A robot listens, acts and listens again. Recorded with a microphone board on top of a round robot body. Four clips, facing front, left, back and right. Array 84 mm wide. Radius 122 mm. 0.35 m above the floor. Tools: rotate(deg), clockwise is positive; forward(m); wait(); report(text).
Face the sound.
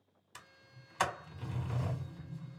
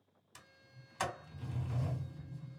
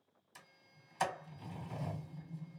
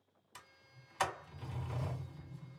rotate(10)
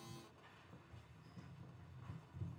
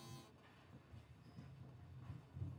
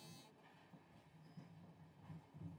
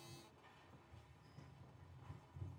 report("Facing the sliding door, 1 to 2 m away.")